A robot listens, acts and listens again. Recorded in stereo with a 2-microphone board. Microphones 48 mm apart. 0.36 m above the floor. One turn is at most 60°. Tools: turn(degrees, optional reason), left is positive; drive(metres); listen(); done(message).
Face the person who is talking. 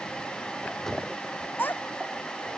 turn(degrees=40, reason="The child speaking: about 40° left or 140° left.")
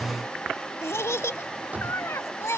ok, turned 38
turn(degrees=60, reason="So it is at 95° left.")
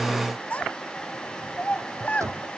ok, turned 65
turn(degrees=30, reason="The child speaking is now 30° left.")
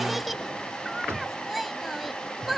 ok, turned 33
done("Found it: a child speaking, straight ahead.")